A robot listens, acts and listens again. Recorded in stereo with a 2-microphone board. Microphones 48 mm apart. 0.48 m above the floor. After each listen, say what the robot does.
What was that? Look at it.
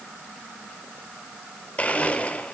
Turn 30° left.
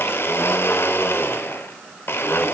Turn 115° left.
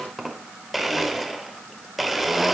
Facing the blender, under 1 m away.